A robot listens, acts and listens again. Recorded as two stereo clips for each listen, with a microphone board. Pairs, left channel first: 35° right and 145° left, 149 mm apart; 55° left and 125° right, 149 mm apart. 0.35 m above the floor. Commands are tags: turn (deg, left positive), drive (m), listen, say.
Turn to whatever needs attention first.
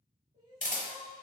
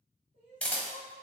<turn deg="85"/>
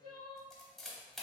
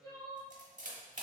<turn deg="-10"/>
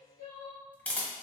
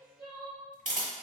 <say>Facing the crying, 1 to 2 m away.</say>